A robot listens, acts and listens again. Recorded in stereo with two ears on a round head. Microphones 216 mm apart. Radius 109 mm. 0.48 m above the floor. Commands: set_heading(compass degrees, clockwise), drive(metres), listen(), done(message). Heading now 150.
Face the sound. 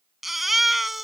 set_heading(120)
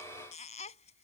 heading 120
set_heading(330)
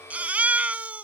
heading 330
done("Facing the baby crying.")